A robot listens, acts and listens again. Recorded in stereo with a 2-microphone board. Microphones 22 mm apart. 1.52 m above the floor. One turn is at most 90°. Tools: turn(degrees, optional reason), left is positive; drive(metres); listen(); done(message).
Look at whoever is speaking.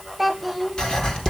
turn(degrees=30)
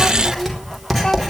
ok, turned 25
listen()
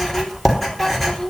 turn(degrees=90, reason="So it is at 155° left.")
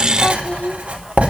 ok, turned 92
turn(degrees=60, reason="The child speaking is now 60° left.")
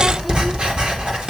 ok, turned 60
listen()
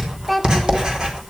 done("Facing the child speaking.")